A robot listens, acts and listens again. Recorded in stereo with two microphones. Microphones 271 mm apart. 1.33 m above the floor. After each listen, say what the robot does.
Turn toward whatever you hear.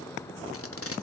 Turn 60° left.
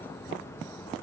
Keep listening.
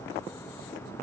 Keep listening.
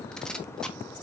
Facing the tape being pulled.